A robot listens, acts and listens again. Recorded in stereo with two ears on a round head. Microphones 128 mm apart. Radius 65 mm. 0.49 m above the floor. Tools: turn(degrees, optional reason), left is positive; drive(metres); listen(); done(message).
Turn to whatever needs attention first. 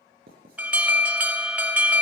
turn(degrees=-30)
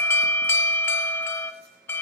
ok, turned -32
turn(degrees=20, reason="So it is at 20° left.")
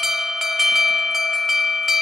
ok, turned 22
done("Facing the alarm, under 1 m away.")